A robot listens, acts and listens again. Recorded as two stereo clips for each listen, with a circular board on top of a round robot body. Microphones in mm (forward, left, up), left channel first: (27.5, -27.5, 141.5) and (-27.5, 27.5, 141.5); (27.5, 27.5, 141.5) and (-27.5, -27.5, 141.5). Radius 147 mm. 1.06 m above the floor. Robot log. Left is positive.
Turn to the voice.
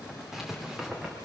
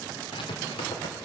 cmd idle
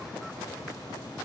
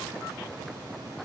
cmd idle
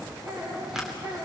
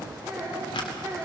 note: The child speaking: 170° left.
cmd yaw +170
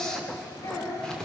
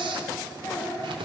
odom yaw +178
note: The child speaking is now 15° right.
cmd yaw -15
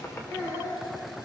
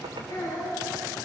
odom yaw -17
end: Facing the child speaking.